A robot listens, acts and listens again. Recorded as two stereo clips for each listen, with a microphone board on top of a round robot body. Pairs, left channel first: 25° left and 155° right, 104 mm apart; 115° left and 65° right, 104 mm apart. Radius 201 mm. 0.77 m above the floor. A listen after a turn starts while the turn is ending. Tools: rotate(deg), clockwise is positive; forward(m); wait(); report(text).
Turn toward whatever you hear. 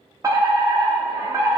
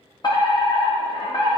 rotate(-150)
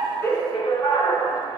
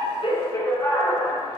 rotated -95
rotate(-55)
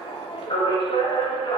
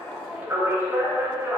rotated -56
report("Facing the fire alarm.")